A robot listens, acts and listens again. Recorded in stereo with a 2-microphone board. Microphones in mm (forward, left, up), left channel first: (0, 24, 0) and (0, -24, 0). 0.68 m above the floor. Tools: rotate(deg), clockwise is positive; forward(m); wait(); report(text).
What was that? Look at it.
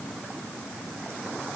wait()
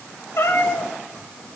rotate(-90)
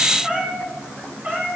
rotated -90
rotate(30)
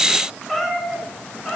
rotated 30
report("Facing the cat meowing, over 4 m away.")